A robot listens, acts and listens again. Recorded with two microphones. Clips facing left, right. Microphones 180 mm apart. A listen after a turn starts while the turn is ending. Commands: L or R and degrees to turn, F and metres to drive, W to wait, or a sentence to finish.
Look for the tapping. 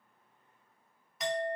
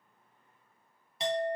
W
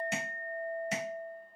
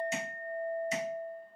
L65
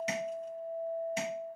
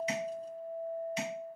L50
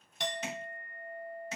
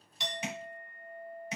R20
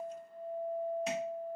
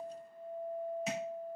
W
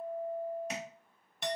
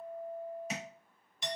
Facing the tapping, 1 to 2 m away.